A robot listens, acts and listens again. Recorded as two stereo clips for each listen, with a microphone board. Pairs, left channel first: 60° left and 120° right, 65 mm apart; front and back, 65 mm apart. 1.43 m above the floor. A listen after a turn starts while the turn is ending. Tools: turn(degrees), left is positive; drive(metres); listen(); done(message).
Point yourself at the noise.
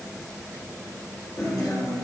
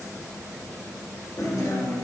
turn(degrees=35)
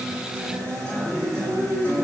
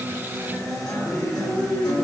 turn(degrees=-15)
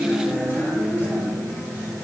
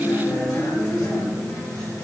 done("Found it: a guitar, straight ahead.")